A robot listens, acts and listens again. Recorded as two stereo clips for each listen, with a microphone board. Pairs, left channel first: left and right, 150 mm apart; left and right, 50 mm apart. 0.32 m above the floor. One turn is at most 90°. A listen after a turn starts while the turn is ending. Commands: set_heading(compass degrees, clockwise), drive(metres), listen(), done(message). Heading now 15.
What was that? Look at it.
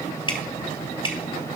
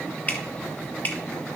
set_heading(345)
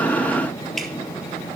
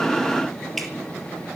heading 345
done("Found it: dripping, straight ahead.")